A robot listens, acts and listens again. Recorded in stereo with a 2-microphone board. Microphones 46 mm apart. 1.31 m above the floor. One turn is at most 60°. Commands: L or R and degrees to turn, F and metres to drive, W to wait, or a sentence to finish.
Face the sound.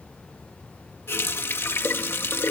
L60
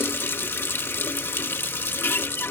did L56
L60
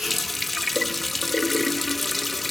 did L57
Facing the running tap.